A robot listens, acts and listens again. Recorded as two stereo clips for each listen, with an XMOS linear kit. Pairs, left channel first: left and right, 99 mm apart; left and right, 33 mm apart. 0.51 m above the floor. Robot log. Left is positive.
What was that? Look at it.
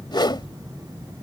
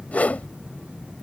note: The whoosh: about 55° left or 125° left.
cmd yaw +55
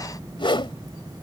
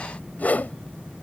note: So it is at 70° left.
cmd yaw +70
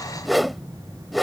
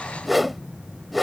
end: Found it: a whoosh, straight ahead.